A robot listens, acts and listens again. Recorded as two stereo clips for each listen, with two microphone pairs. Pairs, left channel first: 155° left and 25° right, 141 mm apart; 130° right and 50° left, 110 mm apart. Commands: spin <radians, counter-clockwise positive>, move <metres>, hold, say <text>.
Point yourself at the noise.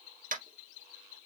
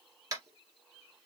spin -0.17
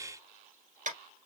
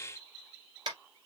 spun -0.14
say Facing the tapping, 2 to 4 m away.